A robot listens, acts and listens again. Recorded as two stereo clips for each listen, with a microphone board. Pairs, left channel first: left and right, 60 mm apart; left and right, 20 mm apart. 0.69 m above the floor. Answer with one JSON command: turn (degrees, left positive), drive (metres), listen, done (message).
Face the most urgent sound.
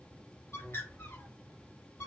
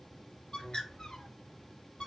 {"listen": true}
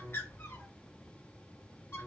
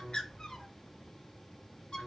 {"listen": true}
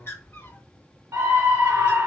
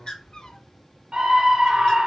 {"turn": -70}
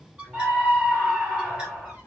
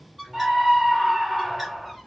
{"turn": -10}
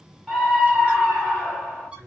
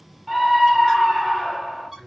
{"done": "Found it: a scream, straight ahead, 2 to 4 m away."}